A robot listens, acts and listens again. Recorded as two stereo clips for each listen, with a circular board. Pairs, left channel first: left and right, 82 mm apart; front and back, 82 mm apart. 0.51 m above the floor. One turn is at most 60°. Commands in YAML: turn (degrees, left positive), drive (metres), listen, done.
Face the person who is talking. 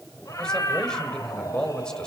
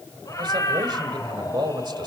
turn: 60
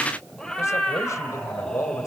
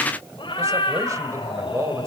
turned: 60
turn: 60
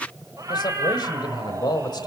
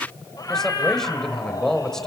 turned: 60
turn: 60
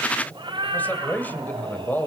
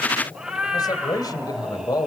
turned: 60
turn: 25
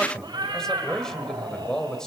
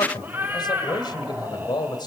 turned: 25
turn: 10
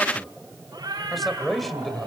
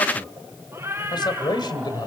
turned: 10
done: "Found it: a man speaking, straight ahead, 2 to 4 m away."